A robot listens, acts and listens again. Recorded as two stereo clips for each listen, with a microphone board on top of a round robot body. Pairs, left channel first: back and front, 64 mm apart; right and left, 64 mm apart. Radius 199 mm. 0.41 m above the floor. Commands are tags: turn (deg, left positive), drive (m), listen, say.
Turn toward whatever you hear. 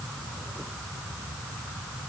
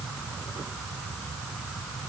<listen/>
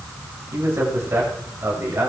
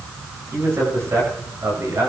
<turn deg="50"/>
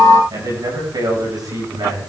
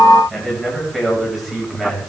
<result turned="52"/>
<say>Facing the man speaking, over 4 m away.</say>